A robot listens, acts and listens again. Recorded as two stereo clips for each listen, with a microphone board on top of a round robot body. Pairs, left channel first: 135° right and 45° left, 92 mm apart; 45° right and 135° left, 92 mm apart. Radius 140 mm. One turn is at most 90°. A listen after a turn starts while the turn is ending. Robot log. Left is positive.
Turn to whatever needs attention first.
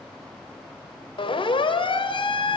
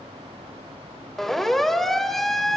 note: The siren: 130° right.
cmd yaw -90
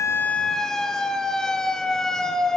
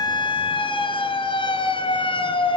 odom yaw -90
note: The siren is now 50° right.
cmd yaw -50
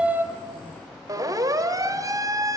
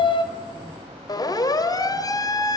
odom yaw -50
end: Facing the siren, 2 to 4 m away.